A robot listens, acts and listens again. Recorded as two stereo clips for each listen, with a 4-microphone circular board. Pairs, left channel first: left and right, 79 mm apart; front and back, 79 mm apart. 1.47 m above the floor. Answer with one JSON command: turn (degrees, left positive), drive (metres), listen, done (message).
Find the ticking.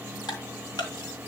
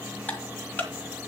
{"turn": 65}
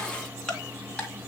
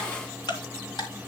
{"turn": 10}
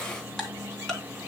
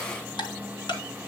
{"done": "Found it: ticking, straight ahead, 2 to 4 m away."}